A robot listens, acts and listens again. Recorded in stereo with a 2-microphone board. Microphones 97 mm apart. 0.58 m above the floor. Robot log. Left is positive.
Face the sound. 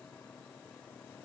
cmd idle
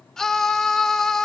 cmd yaw +30
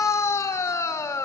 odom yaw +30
note: So it is at 145° left.
cmd yaw +145
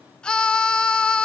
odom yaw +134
note: The scream is now 10° left.
cmd yaw +10
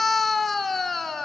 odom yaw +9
end: Facing the scream.